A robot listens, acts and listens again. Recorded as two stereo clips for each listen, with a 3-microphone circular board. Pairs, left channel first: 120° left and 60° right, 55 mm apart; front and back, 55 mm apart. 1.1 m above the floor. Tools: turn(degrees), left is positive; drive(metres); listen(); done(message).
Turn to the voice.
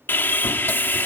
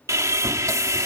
listen()
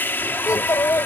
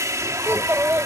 turn(degrees=130)
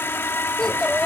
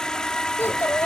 turn(degrees=40)
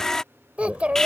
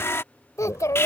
done("Facing the child speaking.")